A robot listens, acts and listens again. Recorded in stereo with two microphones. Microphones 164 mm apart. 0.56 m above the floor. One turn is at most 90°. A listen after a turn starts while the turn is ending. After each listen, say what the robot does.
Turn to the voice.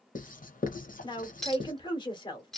Turn 30° left.
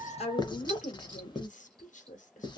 Turn 90° left.
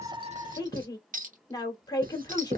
Turn 30° left.
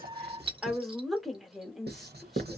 Found it: a woman speaking, straight ahead.